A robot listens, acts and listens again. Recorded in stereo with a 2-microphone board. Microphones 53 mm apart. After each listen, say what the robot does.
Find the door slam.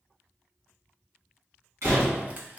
Turn 75° right.
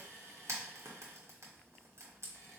Keep listening.
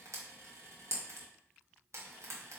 I heard a door slam, but can't make it out now. It was about straight ahead or 30° right.